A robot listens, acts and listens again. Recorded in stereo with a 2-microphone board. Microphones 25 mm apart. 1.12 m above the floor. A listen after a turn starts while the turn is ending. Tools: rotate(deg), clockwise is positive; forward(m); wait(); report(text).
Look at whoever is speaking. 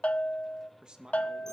rotate(35)
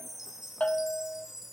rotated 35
wait()
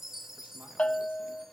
wait()
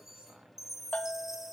report("I heard a man speaking, but can't make it out now. It was about straight ahead or 110° right.")